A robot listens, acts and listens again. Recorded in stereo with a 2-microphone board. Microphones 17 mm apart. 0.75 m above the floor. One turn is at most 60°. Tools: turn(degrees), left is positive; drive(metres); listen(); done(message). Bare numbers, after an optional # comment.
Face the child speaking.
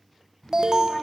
# The child speaking: about 20° left or 160° left.
turn(20)
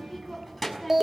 done("Facing the child speaking.")